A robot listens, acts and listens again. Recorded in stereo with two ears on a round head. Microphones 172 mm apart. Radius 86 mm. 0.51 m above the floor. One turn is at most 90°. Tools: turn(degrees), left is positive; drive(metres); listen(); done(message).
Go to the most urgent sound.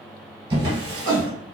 turn(degrees=-65)
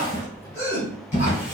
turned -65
turn(degrees=-15)
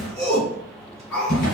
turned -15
drive(metres=1.0)
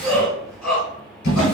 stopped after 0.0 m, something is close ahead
done("Something is in my way. I am facing the shout but have not reached it.")